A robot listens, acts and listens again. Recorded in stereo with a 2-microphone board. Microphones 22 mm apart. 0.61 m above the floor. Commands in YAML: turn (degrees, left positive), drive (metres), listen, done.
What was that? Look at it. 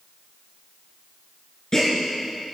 turn: 25
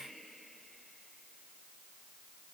listen: true
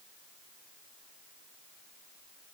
done: "I heard a gasp, but can't make it out now. It was about straight ahead or 130° left."